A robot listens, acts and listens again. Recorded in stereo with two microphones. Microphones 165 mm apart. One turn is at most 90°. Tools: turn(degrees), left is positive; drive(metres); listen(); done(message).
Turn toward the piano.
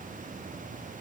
listen()
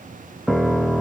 turn(degrees=30)
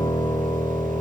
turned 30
turn(degrees=90)
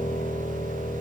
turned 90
turn(degrees=65)
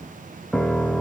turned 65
done("Facing the piano, 1 to 2 m away.")